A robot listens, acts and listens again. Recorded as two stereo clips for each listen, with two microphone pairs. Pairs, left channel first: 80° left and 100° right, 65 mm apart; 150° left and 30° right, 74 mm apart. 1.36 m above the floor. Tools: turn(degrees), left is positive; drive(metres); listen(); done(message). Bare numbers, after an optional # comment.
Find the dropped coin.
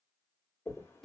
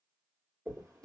# The dropped coin: 35° left.
turn(35)
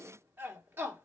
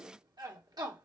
done("Facing where the dropped coin came from. I can't hear it now.")